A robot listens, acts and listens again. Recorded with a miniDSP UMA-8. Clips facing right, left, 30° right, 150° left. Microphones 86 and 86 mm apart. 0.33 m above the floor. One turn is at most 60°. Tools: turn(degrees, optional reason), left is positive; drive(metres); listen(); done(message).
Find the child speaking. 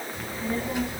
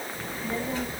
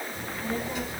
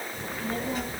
turn(degrees=-60, reason="The child speaking: 165° right.")
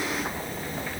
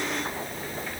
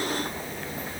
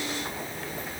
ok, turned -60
turn(degrees=-60, reason="The child speaking is now 90° right.")
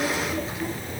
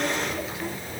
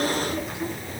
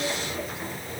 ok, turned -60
turn(degrees=-35, reason="The child speaking is now 35° right.")
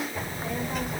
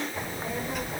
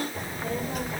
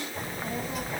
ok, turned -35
done("Facing the child speaking.")